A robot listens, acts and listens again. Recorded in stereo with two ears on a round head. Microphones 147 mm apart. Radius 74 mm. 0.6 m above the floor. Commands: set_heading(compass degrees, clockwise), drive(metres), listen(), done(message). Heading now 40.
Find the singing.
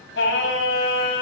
set_heading(310)
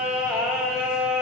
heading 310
done("Facing the singing, 2 to 4 m away.")